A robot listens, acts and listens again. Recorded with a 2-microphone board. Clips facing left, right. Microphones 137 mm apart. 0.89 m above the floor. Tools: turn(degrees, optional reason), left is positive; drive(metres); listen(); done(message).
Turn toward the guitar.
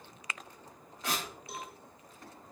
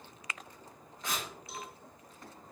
listen()
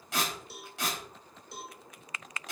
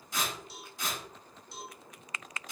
listen()
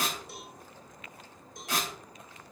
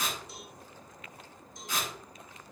done("I can't make out a guitar, only a cowbell and tearing paper.")